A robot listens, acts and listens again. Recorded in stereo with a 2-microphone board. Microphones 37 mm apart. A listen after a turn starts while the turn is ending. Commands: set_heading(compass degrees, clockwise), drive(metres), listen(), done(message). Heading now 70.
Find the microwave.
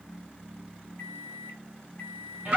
set_heading(15)
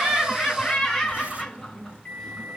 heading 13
set_heading(343)
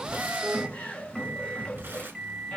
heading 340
done("Facing the microwave.")